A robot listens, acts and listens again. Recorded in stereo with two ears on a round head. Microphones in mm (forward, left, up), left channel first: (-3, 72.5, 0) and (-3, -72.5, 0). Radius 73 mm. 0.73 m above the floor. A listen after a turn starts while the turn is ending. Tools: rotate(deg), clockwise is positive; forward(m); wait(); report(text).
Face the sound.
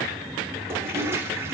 rotate(15)
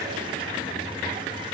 wait()
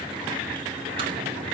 wait()
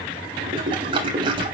rotate(150)
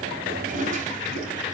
rotate(50)
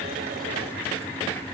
wait()
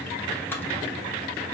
rotate(-15)
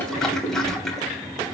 report("Facing the toilet flushing, 2 to 4 m away.")